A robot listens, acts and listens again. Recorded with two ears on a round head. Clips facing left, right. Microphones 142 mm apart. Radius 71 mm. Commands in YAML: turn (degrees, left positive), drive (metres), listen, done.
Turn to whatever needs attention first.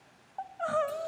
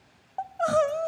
turn: -50
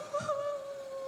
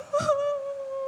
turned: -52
turn: -75
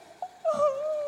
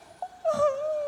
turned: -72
done: "Found it: crying, straight ahead, under 1 m away."